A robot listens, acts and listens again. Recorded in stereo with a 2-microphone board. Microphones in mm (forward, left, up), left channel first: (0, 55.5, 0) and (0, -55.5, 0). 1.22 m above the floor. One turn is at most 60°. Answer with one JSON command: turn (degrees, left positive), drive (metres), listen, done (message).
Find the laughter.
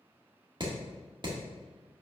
{"listen": true}
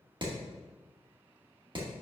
{"listen": true}
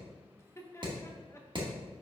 {"turn": 25}
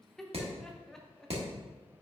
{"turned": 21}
{"done": "Facing the laughter, 1 to 2 m away."}